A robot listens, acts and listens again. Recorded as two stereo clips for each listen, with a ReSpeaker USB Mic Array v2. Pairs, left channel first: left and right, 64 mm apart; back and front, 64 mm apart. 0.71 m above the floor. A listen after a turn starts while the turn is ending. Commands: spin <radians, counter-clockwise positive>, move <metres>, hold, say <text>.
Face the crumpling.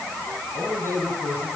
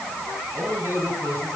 hold
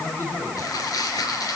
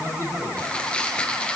spin 1.83
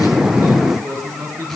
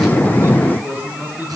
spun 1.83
hold
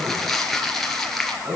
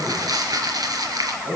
say Facing the crumpling.